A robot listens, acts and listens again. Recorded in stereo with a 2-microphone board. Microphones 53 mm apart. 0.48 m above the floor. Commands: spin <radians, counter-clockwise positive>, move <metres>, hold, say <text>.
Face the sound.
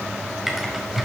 spin -0.52
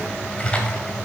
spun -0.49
spin 0.44
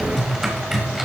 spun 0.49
say Facing the typing on a keyboard.